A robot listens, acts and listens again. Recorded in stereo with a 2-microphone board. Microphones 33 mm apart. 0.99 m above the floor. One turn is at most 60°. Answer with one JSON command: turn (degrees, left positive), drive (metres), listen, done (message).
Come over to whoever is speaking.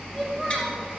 {"turn": -30}
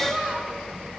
{"turn": -60}
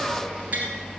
{"turn": -60}
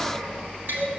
{"turn": -35}
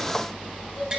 {"turn": 10}
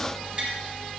{"listen": true}
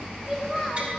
{"drive": 1.0}
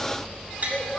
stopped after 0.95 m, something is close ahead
{"done": "Something is in my way. I am facing the child speaking but have not reached it."}